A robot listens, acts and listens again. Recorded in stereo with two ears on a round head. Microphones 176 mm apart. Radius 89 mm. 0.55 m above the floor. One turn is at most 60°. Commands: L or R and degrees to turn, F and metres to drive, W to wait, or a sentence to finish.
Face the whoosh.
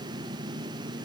W
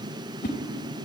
L50
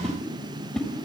Found it: a whoosh, straight ahead.